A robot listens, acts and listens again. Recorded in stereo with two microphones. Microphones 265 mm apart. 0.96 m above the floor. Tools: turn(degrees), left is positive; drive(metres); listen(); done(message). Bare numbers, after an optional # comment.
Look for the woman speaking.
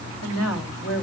# The woman speaking: about 70° left or 110° left.
turn(70)
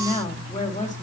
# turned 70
# So it is at 30° left.
turn(30)
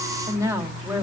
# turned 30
# The woman speaking is now 10° right.
turn(-10)
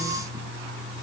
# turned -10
listen()
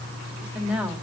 done("Found it: a woman speaking, straight ahead, 2 to 4 m away.")